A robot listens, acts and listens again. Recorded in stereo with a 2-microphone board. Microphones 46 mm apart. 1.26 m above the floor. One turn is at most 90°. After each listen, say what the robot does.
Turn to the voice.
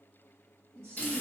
Turn 90° right.
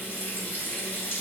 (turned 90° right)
Keep listening.
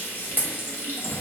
Keep listening.
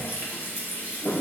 Facing where the woman speaking came from. I can't hear it now.